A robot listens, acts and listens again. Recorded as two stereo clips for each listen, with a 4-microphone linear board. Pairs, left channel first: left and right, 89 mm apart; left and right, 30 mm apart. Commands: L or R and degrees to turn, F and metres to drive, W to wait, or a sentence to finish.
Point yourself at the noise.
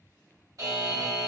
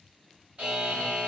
R45
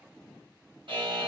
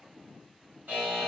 R90
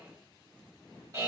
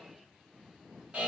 R40
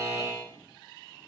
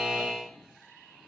R15
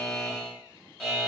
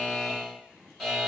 Facing the buzzer, 1 to 2 m away.